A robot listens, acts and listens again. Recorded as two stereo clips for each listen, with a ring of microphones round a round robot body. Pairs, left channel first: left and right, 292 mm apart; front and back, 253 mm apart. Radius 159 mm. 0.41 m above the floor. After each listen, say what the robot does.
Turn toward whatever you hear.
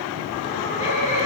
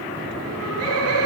Turn 155° left.
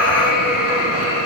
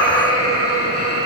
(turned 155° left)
Turn 25° left.
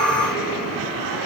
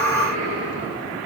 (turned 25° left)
Keep listening.
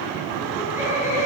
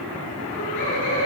Turn 10° right.
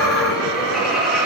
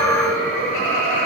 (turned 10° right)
Found it: laughter, straight ahead.